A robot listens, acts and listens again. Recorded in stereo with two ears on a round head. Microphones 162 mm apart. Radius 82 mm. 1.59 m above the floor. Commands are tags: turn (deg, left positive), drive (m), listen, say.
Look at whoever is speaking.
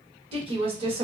<turn deg="-30"/>
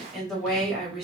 <say>Facing the woman speaking.</say>